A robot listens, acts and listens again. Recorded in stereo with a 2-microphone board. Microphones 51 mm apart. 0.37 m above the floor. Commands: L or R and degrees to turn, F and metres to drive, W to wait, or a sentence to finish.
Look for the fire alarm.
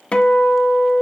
W
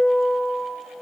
W
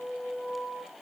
I can't make out a fire alarm, only a guitar.